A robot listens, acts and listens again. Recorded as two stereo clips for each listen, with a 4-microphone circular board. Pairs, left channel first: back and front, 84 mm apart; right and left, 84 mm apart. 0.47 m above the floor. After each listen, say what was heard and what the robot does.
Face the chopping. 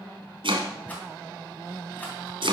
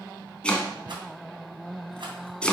The chopping: 10° right. Turn 10° right.
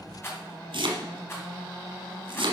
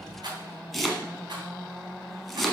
Found it: chopping, straight ahead.